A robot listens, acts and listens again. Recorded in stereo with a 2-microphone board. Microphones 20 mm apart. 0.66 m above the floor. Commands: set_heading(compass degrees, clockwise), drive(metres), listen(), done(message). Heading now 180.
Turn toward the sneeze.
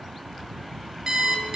listen()
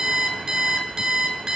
listen()
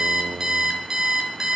done("I can't make out a sneeze to turn to.")